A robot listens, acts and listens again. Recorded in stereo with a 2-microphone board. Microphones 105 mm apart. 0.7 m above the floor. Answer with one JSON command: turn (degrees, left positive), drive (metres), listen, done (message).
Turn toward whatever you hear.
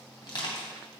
{"turn": 45}
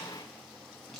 {"listen": true}
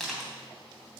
{"done": "Facing the crushing, 2 to 4 m away."}